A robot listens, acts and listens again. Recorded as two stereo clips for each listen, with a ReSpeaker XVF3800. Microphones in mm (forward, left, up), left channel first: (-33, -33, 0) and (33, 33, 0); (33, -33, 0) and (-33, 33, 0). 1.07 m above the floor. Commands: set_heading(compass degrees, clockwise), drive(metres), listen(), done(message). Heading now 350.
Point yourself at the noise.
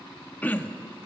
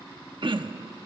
set_heading(200)
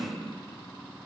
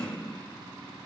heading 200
set_heading(190)
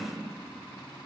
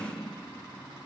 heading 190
done("Facing the throat clearing.")